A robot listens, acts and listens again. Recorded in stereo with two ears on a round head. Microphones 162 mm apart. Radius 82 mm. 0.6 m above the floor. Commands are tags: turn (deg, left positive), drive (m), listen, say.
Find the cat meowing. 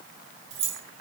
<listen/>
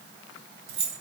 <listen/>
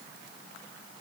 <say>I can't make out a cat meowing to turn to.</say>